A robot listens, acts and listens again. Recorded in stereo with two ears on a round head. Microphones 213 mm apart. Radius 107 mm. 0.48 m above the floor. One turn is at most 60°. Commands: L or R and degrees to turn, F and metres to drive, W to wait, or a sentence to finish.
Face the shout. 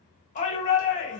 L30
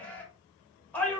Facing the shout, 1 to 2 m away.